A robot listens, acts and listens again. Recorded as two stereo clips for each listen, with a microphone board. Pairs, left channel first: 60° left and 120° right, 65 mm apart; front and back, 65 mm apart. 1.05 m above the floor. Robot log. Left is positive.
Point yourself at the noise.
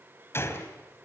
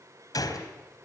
note: The gunshot: 10° left.
cmd yaw +10
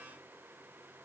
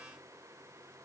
end: I heard a gunshot from this way, but can't make it out now.